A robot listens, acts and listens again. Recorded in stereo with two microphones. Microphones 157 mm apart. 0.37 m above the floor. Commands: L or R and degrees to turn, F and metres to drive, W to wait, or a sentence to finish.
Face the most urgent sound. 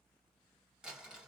W
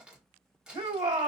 R35
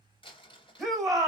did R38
Facing the shout, 1 to 2 m away.